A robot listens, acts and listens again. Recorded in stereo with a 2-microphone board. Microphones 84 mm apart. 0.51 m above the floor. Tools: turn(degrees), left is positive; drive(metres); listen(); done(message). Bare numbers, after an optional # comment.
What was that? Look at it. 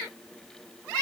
listen()
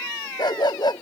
# The dog barking: about 60° left or 120° left.
turn(60)
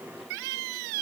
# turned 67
listen()
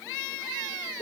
# So it is at 55° left.
turn(55)
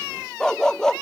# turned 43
# The dog barking is now 10° left.
turn(10)
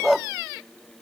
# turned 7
done("Facing the dog barking.")